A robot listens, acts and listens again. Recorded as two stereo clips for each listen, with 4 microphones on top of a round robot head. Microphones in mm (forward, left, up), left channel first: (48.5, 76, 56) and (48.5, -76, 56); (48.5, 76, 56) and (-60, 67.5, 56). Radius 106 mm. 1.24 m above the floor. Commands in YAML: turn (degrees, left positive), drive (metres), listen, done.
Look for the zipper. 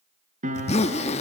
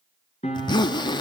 turn: 45
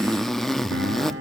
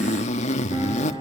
done: "Facing the zipper, 1 to 2 m away."